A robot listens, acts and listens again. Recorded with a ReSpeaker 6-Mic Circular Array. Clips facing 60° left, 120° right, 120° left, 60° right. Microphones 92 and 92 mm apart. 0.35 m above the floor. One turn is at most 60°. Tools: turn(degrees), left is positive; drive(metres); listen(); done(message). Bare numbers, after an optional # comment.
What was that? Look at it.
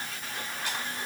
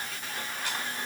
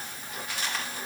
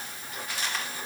listen()
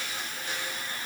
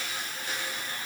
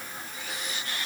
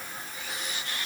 listen()
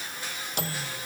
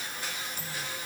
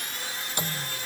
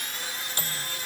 # The microwave: 50° left.
turn(50)
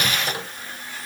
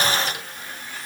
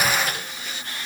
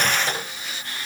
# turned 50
listen()
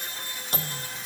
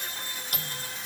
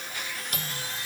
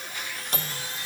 done("Found it: a microwave, straight ahead.")